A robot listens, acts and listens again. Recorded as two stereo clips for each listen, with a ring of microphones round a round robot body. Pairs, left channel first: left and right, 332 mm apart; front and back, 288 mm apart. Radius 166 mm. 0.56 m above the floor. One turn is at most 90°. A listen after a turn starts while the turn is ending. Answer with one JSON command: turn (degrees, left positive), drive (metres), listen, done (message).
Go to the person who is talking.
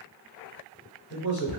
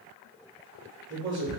{"turn": 90}
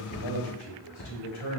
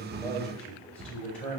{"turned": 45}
{"turn": 85}
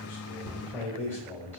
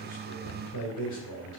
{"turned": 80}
{"drive": 1.0}
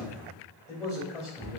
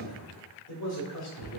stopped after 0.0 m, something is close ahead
{"turn": 10}
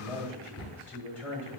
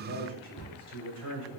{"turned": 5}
{"done": "Something is in my way. I am facing the man speaking but have not reached it."}